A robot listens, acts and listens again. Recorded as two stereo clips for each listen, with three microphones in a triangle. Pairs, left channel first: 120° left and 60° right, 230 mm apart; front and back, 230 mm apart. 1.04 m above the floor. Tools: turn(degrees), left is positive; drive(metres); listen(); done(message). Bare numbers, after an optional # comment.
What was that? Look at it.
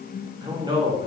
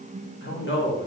# The man speaking: 10° left.
turn(10)
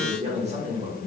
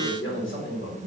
done("Found it: a man speaking, straight ahead.")